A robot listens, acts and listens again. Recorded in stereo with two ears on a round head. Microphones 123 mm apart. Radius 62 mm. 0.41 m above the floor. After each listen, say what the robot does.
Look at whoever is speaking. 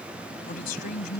Turn 60° left.
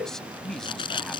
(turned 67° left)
Facing the man speaking.